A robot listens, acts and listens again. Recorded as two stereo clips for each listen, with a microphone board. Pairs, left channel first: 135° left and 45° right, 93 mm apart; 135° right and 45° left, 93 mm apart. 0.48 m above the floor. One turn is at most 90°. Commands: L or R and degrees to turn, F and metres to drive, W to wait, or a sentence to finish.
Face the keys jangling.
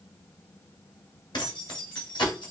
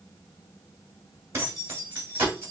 L90
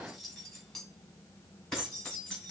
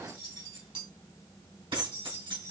L50
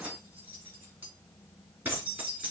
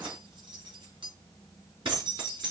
L20
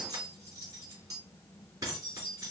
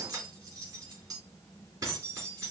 Found it: keys jangling, straight ahead, 2 to 4 m away.